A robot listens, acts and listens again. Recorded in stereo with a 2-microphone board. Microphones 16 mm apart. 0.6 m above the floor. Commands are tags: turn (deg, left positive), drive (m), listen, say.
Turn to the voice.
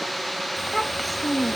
<turn deg="30"/>
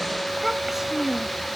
<turn deg="-25"/>
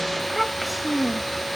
<say>Facing the child speaking.</say>